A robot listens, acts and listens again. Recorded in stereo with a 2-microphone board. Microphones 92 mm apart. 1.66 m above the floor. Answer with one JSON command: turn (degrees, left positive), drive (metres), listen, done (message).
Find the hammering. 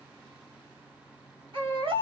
{"listen": true}
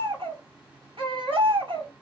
{"listen": true}
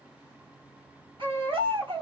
{"done": "I can't make out hammering, only a baby crying."}